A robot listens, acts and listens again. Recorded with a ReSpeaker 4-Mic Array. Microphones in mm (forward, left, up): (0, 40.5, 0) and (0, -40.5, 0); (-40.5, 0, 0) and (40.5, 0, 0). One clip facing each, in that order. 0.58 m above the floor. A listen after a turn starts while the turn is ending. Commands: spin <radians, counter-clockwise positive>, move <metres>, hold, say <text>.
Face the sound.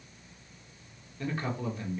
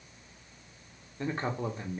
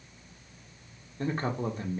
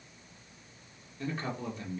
spin -2.53
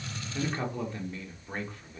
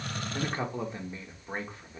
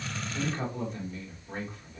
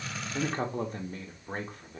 spin -0.44
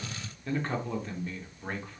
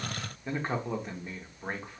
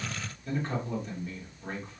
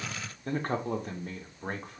spin -0.35
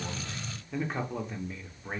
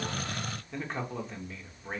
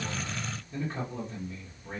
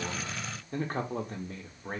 say Found it: a man speaking, straight ahead.